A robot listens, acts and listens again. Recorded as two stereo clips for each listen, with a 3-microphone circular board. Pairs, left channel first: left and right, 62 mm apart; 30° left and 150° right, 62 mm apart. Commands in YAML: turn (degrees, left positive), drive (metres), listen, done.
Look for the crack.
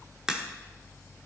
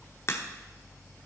turn: -10
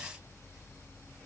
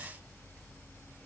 done: "I heard a crack from this way, but can't make it out now."